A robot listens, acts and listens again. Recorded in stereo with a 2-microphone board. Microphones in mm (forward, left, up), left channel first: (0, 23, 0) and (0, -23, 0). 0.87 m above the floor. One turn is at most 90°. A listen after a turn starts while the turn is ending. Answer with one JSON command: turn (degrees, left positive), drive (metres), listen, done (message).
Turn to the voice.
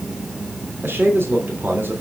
{"turn": -55}
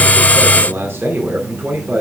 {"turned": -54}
{"turn": -65}
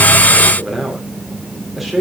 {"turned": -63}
{"done": "Facing the man speaking."}